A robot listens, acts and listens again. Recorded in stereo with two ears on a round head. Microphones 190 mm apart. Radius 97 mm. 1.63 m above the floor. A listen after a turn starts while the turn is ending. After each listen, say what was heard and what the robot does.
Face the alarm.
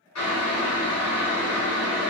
Keep listening.
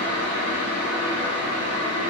Keep listening.
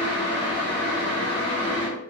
I can't make out an alarm, only boiling.